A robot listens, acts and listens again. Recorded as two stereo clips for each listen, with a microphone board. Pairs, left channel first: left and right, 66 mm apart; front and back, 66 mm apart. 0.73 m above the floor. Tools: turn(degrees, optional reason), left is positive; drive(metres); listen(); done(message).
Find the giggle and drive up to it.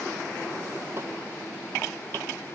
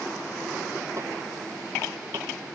listen()
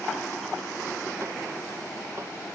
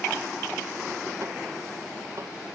listen()
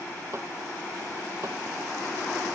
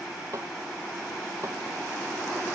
done("I can't make out a giggle to turn to.")